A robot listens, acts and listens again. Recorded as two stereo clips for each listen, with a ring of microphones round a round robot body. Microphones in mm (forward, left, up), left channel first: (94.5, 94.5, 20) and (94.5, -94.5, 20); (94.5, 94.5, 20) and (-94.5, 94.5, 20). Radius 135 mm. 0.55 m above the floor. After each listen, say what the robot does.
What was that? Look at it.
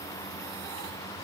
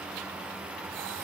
Keep listening.
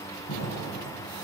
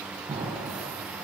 Turn 115° left.
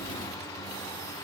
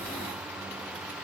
I heard an explosion from this way, but can't make it out now.